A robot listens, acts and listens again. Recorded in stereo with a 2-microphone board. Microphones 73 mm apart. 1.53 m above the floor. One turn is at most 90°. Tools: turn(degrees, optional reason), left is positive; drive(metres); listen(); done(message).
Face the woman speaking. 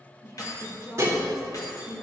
turn(degrees=40, reason="The woman speaking: about 40° left or 140° left.")
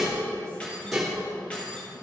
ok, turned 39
listen()
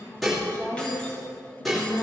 turn(degrees=90, reason="So it is at 105° left.")
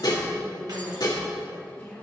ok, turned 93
turn(degrees=10, reason="The woman speaking is now 10° left.")
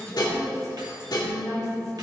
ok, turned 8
done("Facing the woman speaking.")